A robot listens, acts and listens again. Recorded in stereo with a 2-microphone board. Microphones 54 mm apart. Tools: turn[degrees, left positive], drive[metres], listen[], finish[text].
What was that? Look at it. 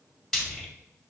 Action: turn[30]
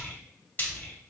Thought: So it is at 145° left.
Action: turn[145]
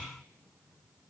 Action: listen[]
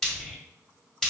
Thought: The frying is now 10° left.
Action: turn[10]
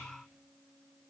Action: listen[]
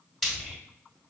Action: finish[Found it: frying, straight ahead.]